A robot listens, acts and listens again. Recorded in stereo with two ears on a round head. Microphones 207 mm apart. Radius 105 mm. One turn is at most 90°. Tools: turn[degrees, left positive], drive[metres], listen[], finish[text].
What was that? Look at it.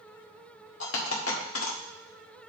Thought: The dropped coin: about 60° left or 120° left.
Action: turn[60]
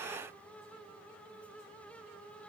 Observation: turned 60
Action: listen[]
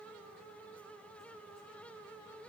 Action: finish[I heard a dropped coin, but can't make it out now. It was about straight ahead or 60° left.]